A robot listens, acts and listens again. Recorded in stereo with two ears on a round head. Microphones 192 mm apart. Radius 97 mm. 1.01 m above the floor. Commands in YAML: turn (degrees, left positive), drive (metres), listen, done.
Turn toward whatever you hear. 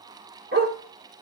turn: -50
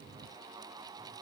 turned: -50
listen: true
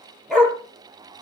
done: "Facing the dog barking, over 4 m away."